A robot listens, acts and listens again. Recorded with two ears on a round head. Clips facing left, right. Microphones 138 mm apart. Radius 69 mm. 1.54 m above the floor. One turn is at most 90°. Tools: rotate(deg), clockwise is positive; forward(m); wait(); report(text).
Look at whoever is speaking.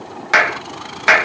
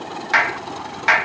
wait()
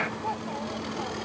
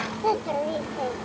rotate(75)
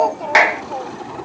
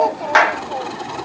wait()
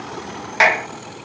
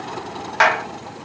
wait()
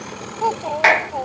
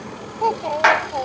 report("Found it: a child speaking, straight ahead.")